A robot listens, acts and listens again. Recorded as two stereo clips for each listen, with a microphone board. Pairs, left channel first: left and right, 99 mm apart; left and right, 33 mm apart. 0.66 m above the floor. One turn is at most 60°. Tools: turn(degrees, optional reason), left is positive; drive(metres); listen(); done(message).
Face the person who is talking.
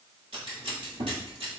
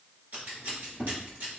listen()
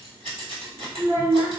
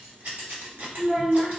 turn(degrees=-35, reason="The child speaking: about 35° right or 145° right.")
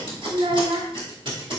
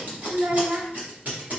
turn(degrees=-60, reason="So it is at 110° right.")
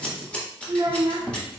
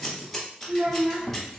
turn(degrees=-40, reason="The child speaking is now 40° right.")
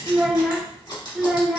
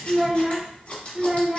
done("Facing the child speaking.")